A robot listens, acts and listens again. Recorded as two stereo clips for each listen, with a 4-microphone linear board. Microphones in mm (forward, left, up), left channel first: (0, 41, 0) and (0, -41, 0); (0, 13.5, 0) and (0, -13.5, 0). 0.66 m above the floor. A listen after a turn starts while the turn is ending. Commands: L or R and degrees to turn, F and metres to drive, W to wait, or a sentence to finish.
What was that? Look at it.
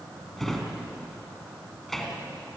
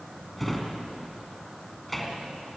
L30
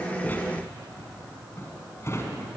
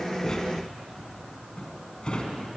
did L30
L145
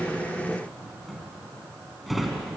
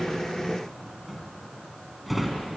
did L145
Found it: a drawer, straight ahead, 2 to 4 m away.